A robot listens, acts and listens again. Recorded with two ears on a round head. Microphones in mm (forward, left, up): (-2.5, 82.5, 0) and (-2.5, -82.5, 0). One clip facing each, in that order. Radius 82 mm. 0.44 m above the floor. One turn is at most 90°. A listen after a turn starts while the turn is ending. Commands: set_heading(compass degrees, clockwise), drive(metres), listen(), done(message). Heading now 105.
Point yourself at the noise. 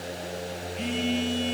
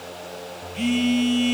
set_heading(155)
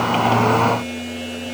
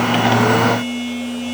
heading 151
done("Found it: a phone buzzing, straight ahead, over 4 m away.")